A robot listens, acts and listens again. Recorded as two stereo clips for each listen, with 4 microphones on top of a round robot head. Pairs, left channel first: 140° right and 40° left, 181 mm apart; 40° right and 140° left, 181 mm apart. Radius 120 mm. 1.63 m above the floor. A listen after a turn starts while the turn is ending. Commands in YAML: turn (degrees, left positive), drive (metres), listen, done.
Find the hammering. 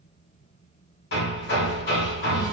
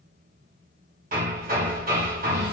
turn: -175
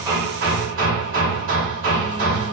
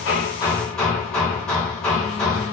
turn: 50
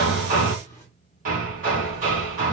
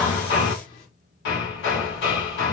turn: -10
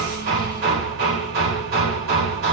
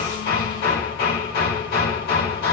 done: "Facing the hammering."